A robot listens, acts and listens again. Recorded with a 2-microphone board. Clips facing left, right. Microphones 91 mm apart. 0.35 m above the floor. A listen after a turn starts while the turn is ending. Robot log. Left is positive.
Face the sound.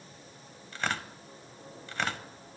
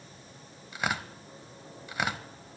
cmd yaw -30
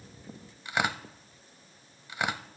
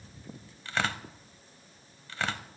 note: So it is at 15° left.
cmd yaw +15
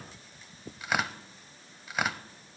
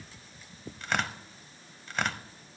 end: Facing the tearing paper, under 1 m away.